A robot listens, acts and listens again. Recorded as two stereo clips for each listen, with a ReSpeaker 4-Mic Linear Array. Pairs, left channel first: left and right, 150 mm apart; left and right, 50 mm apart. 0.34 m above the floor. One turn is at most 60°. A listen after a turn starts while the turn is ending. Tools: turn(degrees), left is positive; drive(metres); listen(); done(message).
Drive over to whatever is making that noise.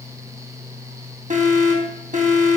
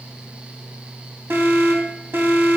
turn(degrees=-60)
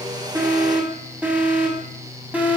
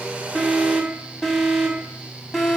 turn(degrees=-10)
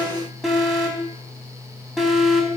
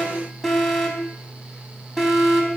drive(metres=1.0)
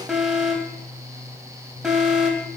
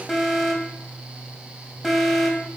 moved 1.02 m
drive(metres=1.0)
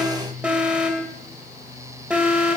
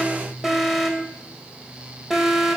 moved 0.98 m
turn(degrees=-10)
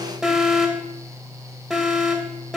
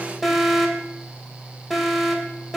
drive(metres=1.0)
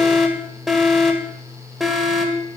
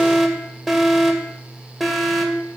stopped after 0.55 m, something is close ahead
done("Arrived at the alarm, straight ahead.")